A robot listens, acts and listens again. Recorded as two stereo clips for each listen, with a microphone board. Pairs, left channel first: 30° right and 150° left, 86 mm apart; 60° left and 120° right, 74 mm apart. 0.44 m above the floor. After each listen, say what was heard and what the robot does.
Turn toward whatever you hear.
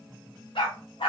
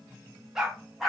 The dog barking: 30° right. Turn 30° right.
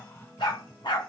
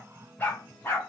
Facing the dog barking, 1 to 2 m away.